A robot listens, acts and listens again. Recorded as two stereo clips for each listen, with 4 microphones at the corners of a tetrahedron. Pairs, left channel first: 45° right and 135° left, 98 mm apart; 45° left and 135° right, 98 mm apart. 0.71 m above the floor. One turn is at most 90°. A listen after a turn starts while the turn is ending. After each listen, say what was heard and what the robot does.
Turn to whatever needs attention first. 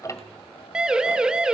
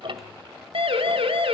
The siren: 145° right. Turn 90° right.
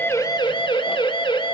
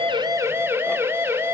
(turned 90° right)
The siren is now 70° right. Turn 70° right.
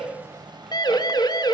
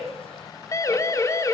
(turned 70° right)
The siren is now 10° right. Turn 10° right.
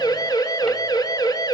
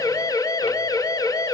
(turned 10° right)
Found it: a siren, straight ahead, 2 to 4 m away.